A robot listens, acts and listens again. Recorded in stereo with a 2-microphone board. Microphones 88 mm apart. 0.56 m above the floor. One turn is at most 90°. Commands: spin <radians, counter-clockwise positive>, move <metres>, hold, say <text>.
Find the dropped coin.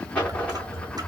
spin 0.52
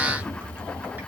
hold
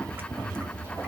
say I heard a dropped coin, but can't make it out now. It was about 15° right or 135° left.